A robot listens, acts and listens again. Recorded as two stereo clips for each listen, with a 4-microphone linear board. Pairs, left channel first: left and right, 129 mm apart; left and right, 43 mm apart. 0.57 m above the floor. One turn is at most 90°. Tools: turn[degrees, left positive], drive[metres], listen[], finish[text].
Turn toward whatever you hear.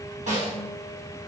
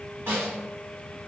Thought: The snare drum: about 65° right or 115° right.
Action: turn[-65]
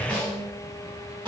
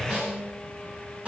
Thought: So it is at 40° right.
Action: turn[-40]
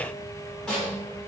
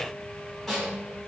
Action: finish[Found it: a snare drum, straight ahead, 1 to 2 m away.]